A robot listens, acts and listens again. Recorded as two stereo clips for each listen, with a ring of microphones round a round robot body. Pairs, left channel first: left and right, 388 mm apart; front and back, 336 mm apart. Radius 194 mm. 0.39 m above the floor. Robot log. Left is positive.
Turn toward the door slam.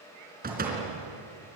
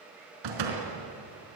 note: The door slam: 160° right.
cmd yaw -160
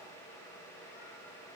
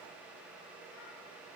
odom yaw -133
note: Nothing new. It was at 25° right.
cmd yaw -25
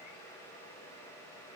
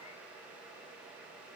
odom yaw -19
end: I heard a door slam from this way, but can't make it out now.